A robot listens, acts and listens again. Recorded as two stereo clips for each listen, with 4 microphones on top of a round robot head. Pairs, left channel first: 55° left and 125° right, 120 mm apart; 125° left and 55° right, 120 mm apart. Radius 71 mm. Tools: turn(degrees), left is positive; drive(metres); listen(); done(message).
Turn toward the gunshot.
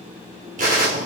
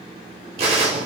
turn(degrees=-100)
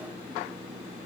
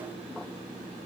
done("I heard a gunshot from this way, but can't make it out now.")